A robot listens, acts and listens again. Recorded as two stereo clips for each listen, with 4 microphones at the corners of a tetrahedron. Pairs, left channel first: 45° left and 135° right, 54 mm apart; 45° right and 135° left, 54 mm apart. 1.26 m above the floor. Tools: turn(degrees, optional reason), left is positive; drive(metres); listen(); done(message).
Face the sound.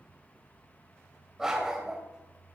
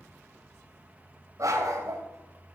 turn(degrees=145, reason="The dog barking: 145° left.")
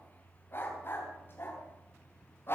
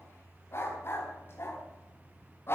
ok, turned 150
done("Facing the dog barking.")